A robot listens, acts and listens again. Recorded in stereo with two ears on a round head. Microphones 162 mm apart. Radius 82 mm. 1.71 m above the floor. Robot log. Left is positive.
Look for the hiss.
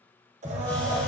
cmd yaw +30
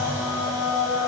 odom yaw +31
cmd idle
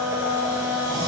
cmd idle
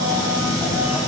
note: So it is at 20° right.
cmd yaw -20
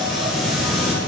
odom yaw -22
end: Facing the hiss, 1 to 2 m away.